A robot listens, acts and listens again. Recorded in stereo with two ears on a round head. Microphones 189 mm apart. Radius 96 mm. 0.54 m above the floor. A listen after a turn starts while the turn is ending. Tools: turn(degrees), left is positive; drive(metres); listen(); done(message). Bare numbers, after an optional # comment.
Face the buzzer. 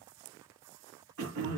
listen()
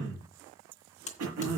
# The buzzer: about 35° left or 145° left.
turn(35)
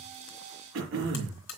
# So it is at 105° left.
turn(105)
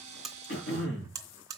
# The buzzer is now 15° right.
turn(-15)
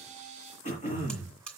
done("Found it: a buzzer, straight ahead, 2 to 4 m away.")